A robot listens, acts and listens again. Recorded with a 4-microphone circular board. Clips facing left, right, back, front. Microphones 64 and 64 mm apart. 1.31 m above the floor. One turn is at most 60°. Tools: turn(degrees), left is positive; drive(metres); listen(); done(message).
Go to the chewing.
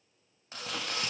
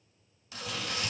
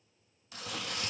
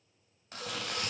turn(degrees=40)
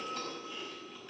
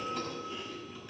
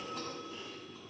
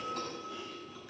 drive(metres=1.0)
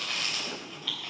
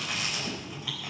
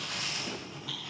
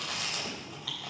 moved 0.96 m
turn(degrees=-10)
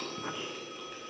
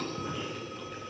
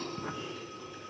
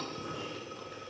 drive(metres=1.0)
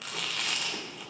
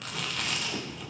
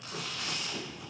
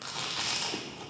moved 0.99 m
drive(metres=1.0)
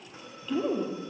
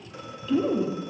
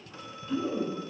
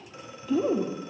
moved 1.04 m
drive(metres=1.0)
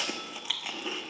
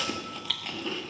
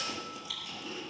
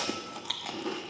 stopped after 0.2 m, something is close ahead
turn(degrees=10)
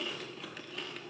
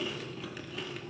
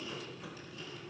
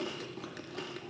done("Arrived at the chewing, straight ahead.")